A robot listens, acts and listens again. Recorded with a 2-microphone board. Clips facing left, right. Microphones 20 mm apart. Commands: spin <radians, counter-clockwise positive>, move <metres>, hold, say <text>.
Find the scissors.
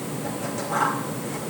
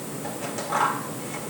spin -0.52
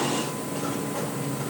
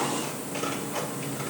hold
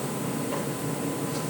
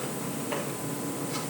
hold
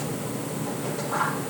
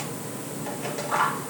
spin -2.44
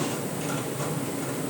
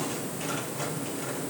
hold
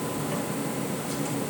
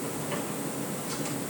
hold
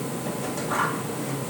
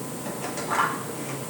spin -0.44
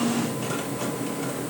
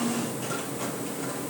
hold
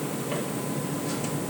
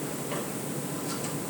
hold
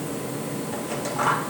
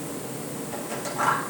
say Facing the scissors, over 4 m away.